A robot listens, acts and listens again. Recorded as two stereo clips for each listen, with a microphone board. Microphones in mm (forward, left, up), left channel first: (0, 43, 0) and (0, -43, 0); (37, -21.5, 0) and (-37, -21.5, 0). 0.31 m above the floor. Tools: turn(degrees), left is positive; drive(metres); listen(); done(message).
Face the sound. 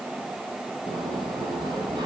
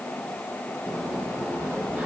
turn(degrees=-110)
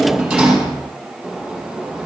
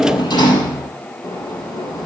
done("Found it: a sliding door, straight ahead.")